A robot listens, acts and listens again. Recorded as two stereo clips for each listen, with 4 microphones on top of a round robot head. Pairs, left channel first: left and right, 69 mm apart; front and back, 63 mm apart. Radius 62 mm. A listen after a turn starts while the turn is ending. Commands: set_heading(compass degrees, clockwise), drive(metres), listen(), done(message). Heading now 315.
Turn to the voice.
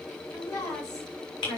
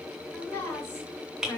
set_heading(265)
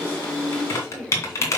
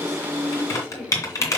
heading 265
listen()
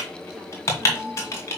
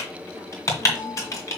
listen()
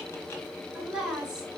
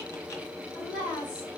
set_heading(275)
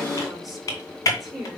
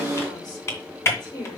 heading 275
done("Found it: a woman speaking, straight ahead, over 4 m away.")